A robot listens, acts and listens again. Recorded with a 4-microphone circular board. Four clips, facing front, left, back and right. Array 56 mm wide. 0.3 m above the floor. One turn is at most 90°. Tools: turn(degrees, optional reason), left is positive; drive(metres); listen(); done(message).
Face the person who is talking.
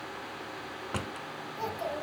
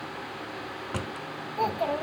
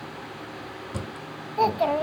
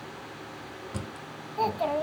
turn(degrees=-90, reason="The child speaking: 175° right.")
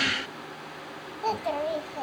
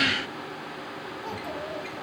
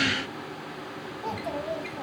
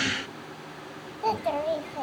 turn(degrees=-60, reason="The child speaking is now 60° right.")
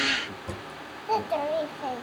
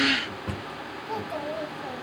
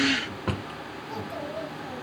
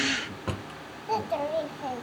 turn(degrees=-25, reason="The child speaking is now 25° right.")
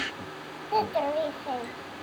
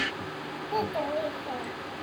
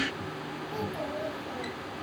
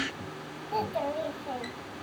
done("Found it: a child speaking, straight ahead, 1 to 2 m away.")